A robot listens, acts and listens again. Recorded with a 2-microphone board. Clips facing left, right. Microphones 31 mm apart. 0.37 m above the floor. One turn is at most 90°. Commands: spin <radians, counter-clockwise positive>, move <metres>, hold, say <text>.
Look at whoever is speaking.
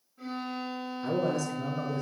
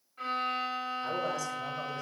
spin 0.52
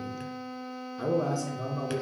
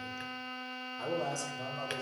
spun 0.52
spin 1.57
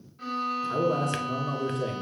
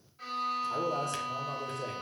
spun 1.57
spin 1.48
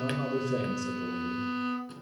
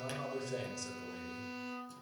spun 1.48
say Found it: a man speaking, straight ahead.